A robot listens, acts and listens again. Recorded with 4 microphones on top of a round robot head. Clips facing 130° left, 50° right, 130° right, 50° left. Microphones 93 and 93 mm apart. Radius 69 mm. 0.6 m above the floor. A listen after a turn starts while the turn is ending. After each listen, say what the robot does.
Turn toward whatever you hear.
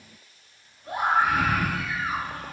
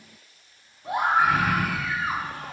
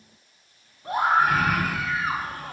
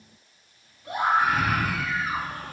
Turn 75° right.
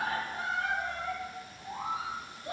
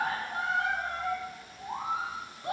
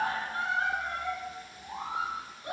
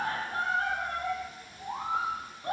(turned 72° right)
Facing the scream, over 4 m away.